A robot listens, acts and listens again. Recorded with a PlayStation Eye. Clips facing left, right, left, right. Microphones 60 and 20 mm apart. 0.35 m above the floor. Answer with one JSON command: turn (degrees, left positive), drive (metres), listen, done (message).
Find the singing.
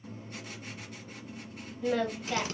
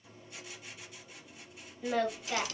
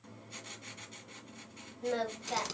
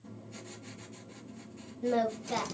{"turn": -30}
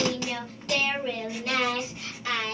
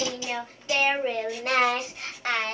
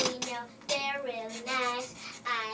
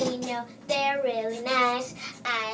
{"turn": -125}
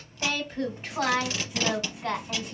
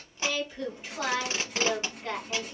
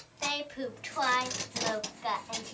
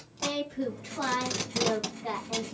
{"turn": 55}
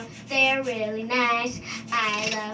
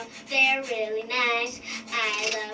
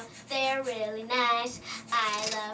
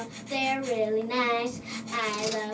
{"turn": 35}
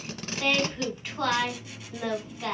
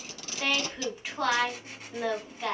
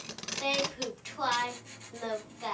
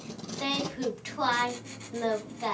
{"turn": -15}
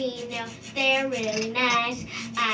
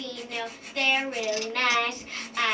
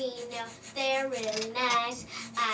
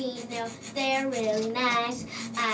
{"done": "Facing the singing, 1 to 2 m away."}